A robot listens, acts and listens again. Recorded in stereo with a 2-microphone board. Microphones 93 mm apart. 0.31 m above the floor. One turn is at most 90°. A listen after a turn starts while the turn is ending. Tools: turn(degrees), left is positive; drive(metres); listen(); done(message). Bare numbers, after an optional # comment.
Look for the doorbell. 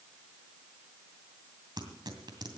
listen()
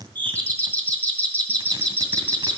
# The doorbell: about 20° left or 160° left.
turn(20)
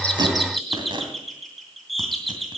done("Found it: a doorbell, straight ahead.")